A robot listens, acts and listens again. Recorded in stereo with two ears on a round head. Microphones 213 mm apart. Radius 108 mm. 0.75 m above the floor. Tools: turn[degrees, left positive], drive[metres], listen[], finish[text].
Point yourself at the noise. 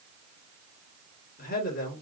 Thought: The man speaking: about 40° left or 140° left.
Action: turn[40]
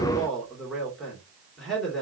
Action: finish[Found it: a man speaking, straight ahead, 2 to 4 m away.]